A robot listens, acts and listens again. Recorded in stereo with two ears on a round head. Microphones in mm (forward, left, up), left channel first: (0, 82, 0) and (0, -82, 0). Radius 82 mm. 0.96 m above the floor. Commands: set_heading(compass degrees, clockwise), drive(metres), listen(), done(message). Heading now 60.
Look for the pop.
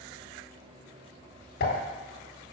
set_heading(0)
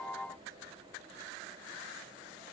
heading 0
listen()
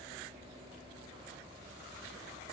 done("I heard a pop, but can't make it out now. It was about straight ahead or 60° left.")